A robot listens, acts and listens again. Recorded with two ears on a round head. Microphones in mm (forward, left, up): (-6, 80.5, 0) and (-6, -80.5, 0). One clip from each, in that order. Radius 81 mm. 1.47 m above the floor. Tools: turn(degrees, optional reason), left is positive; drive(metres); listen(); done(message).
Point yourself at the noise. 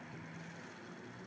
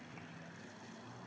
listen()
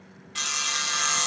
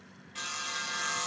turn(degrees=50, reason="The sawing: about 50° left or 130° left.")
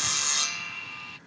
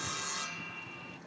turn(degrees=80, reason="So it is at 80° left.")
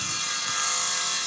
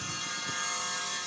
turn(degrees=40, reason="The sawing is now 40° left.")
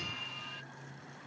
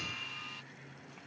turn(degrees=-15, reason="The sawing is now 15° right.")
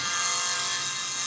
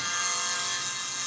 done("Found it: sawing, straight ahead.")